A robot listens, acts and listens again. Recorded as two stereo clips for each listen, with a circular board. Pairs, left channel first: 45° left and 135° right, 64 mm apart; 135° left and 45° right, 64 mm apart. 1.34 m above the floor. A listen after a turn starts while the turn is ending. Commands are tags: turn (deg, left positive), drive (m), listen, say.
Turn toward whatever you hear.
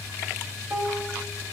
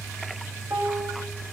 <turn deg="-75"/>
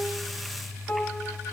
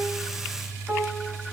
<turn deg="-10"/>
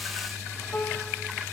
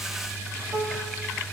<say>Facing the piano, 1 to 2 m away.</say>